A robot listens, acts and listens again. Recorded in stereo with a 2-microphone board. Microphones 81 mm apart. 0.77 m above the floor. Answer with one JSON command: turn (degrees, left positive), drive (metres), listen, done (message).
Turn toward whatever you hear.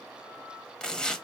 {"turn": 30}
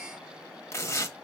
{"turn": 140}
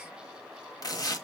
{"turn": 55}
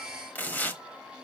{"turn": 25}
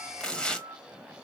{"turn": 10}
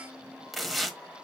{"done": "Facing the tearing paper."}